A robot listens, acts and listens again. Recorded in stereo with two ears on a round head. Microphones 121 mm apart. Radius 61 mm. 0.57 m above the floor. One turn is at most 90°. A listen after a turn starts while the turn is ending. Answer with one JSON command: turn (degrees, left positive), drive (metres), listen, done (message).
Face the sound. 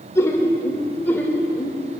{"turn": 30}
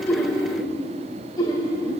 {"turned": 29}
{"turn": 90}
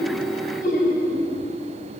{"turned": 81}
{"turn": 70}
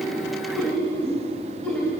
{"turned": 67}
{"turn": 15}
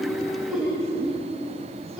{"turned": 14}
{"done": "Facing the laughter, 2 to 4 m away."}